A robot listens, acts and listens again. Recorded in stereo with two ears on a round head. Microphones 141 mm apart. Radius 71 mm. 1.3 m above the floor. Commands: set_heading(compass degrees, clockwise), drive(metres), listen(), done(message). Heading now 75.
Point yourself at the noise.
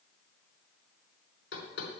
set_heading(345)
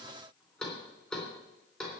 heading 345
set_heading(335)
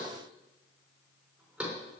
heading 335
done("Found it: knocking, straight ahead.")